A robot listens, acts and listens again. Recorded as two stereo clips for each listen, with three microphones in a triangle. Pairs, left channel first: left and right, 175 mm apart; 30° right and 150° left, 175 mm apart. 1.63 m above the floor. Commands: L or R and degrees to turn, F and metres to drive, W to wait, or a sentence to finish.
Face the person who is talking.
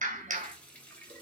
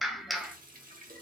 W
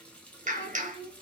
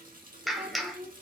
L100
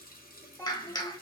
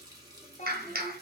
L15
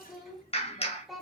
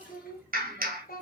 Facing the child speaking, 1 to 2 m away.